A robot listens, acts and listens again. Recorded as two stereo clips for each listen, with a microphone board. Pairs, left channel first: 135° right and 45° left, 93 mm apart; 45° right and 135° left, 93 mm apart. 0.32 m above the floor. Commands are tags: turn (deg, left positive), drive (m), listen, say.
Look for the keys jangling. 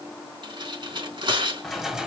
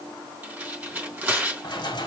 <turn deg="-35"/>
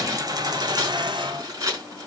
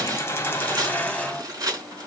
<turn deg="30"/>
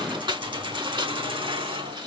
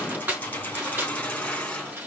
<turn deg="30"/>
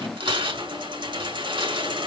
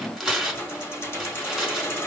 <turn deg="15"/>
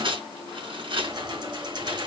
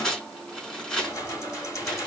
<say>Facing the keys jangling, 2 to 4 m away.</say>